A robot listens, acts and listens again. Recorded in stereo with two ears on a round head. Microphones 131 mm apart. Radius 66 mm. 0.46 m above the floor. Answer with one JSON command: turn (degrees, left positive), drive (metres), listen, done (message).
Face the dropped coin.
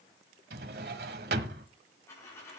{"turn": 15}
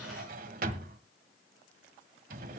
{"listen": true}
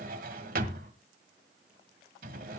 {"done": "I heard a dropped coin, but can't make it out now. It was about straight ahead or 150° left."}